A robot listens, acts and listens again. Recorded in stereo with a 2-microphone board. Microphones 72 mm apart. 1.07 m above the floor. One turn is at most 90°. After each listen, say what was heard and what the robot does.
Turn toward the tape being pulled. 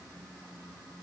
Keep listening.
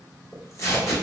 The tape being pulled: about 40° left or 140° left. Turn 40° left.
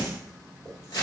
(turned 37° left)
So it is at 95° left. Turn 90° left.
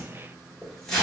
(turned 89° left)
Found it: tape being pulled, straight ahead.